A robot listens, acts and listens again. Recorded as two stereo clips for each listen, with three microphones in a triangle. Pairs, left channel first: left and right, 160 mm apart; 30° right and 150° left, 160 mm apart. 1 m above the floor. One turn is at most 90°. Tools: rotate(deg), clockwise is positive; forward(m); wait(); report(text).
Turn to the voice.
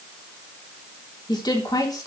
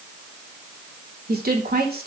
rotate(-90)
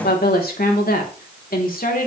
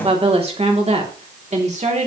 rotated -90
rotate(-90)
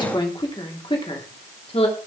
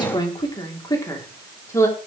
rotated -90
rotate(-40)
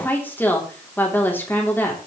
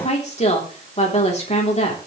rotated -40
rotate(-15)
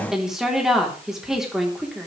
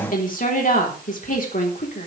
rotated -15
report("Facing the woman speaking, 2 to 4 m away.")